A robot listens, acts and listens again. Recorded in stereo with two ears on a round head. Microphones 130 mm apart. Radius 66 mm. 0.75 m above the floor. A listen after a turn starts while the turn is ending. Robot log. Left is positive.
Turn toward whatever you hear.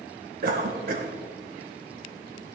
note: The cough: about 65° right or 115° right.
cmd yaw -65
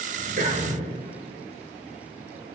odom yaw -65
note: So it is at 50° right.
cmd yaw -50
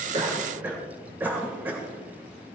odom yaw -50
note: The cough is now 15° right.
cmd yaw -15
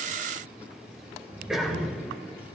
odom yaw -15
end: Found it: a cough, straight ahead.